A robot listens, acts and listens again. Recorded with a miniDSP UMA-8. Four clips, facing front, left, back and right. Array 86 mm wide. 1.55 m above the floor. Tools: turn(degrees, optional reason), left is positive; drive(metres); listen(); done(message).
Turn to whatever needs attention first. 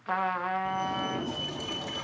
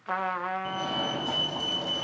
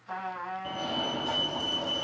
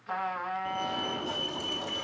turn(degrees=130, reason="The fire alarm: 130° left.")
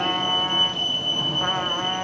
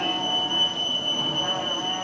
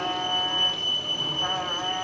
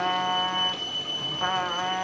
turn(degrees=40, reason="The fire alarm is now 40° left.")
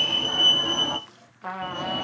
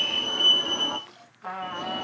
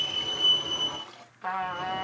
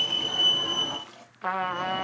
done("Found it: a fire alarm, straight ahead, 2 to 4 m away.")